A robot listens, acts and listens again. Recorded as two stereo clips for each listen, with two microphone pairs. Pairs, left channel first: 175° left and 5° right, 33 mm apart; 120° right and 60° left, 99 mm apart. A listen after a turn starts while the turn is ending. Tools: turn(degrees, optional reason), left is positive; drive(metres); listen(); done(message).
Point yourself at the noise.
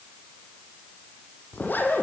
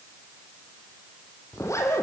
turn(degrees=180, reason="The zipper: straight behind.")
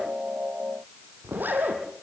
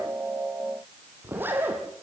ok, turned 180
turn(degrees=-10, reason="The zipper is now 10° right.")
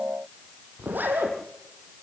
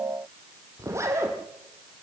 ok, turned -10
done("Found it: a zipper, straight ahead, over 4 m away.")